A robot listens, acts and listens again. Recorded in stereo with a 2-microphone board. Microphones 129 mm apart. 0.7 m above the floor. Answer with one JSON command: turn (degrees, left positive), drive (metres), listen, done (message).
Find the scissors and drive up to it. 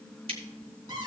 {"turn": -50}
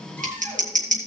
{"turn": -85}
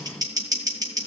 {"turn": -30}
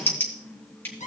{"turn": 15}
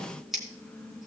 {"drive": 1.0}
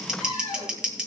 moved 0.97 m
{"drive": 1.0}
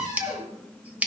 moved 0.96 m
{"turn": -10}
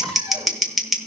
{"drive": 1.0}
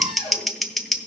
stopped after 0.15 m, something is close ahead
{"done": "I am next to the scissors."}